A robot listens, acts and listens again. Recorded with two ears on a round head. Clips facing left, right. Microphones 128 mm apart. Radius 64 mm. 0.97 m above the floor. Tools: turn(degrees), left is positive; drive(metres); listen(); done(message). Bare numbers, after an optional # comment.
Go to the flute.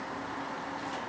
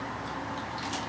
listen()
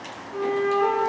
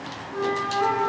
turn(30)
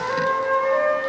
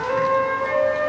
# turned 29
# So it is at 15° right.
turn(-15)
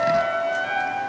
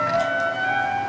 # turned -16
drive(1.0)
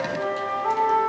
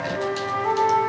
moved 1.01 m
drive(1.0)
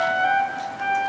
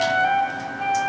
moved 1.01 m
drive(1.0)
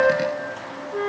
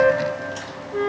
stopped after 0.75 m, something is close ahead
done("I am next to the flute.")